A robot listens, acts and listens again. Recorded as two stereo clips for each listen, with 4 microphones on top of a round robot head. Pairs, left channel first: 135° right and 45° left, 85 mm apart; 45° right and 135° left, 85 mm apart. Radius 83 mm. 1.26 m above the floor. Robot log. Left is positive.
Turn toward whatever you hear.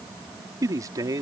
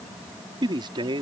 note: The man speaking: 100° left.
cmd yaw +100
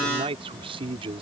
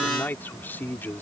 note: The man speaking is now 25° left.
cmd yaw +25
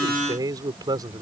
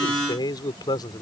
end: Facing the man speaking.